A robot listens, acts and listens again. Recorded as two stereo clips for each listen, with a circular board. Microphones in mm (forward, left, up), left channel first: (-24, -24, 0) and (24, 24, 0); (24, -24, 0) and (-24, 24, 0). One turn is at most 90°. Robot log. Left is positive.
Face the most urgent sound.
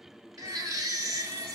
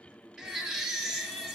note: The baby crying: 55° left.
cmd yaw +55
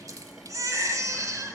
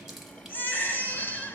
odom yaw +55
note: The baby crying is now 15° left.
cmd yaw +15
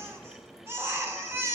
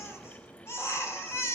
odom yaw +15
end: Found it: a baby crying, straight ahead, 1 to 2 m away.